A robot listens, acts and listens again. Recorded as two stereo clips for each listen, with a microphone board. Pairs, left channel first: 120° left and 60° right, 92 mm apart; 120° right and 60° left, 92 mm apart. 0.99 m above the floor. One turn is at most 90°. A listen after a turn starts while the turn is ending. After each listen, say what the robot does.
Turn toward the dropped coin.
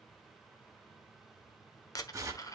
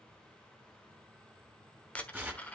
Turn 90° left.
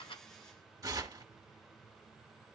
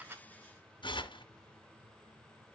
Turn 75° left.
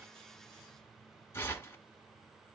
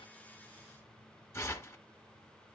I heard a dropped coin from this way, but can't make it out now.